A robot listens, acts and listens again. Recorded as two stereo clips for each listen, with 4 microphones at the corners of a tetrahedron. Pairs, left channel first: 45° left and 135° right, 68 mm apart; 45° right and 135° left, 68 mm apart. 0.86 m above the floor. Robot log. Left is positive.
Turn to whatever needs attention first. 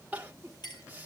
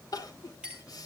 note: The crying: 70° right.
cmd yaw -70
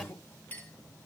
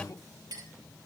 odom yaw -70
note: The crying is now 15° right.
cmd yaw -15
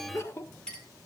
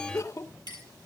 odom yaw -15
end: Facing the crying, 1 to 2 m away.